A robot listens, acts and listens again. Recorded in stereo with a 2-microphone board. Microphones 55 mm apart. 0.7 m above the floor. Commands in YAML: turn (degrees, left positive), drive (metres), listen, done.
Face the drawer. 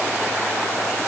listen: true
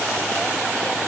listen: true
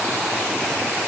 done: "I can't make out a drawer."